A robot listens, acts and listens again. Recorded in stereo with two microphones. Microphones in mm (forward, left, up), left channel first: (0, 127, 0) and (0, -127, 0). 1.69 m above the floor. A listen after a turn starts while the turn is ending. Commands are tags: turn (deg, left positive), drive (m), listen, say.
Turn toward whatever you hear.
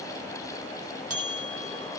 <turn deg="-65"/>
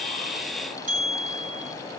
<turn deg="-35"/>
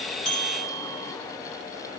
<turn deg="20"/>
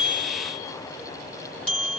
<say>Found it: a bell, straight ahead, 1 to 2 m away.</say>